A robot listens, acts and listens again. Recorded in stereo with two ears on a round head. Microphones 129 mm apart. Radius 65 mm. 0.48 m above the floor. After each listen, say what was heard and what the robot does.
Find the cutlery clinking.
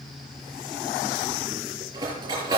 The cutlery clinking: about 30° right or 150° right. Turn 30° right.
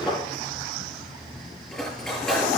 Facing the cutlery clinking.